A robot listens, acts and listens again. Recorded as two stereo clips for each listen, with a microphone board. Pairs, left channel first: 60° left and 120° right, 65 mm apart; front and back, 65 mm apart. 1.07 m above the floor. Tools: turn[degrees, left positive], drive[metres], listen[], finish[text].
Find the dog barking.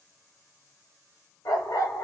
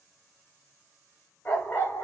Thought: The dog barking: 50° left.
Action: turn[50]
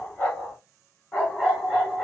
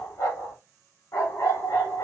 Thought: The dog barking is now 20° right.
Action: turn[-20]
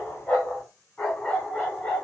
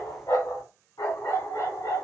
Thought: The dog barking is now 10° right.
Action: turn[-10]
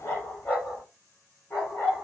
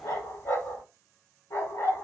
Action: finish[Facing the dog barking.]